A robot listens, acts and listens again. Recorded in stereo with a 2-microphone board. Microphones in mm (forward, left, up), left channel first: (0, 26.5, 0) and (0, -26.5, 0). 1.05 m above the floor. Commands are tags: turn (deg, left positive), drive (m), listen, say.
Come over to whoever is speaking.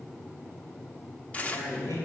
<turn deg="90"/>
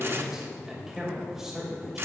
<turn deg="-10"/>
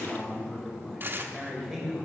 <drive m="1.0"/>
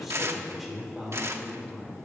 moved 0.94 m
<drive m="1.0"/>
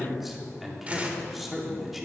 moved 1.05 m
<drive m="1.0"/>
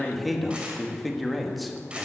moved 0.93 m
<drive m="1.0"/>
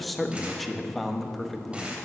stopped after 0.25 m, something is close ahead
<say>Arrived at the man speaking, straight ahead.</say>